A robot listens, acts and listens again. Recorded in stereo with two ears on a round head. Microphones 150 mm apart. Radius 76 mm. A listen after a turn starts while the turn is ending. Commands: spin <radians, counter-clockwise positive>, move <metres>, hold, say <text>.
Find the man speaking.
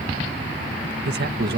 spin -1.13
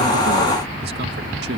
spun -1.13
hold
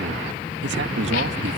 hold
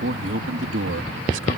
spin -1.40
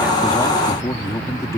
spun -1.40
spin 0.35
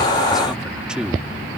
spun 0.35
say Found it: a man speaking, straight ahead.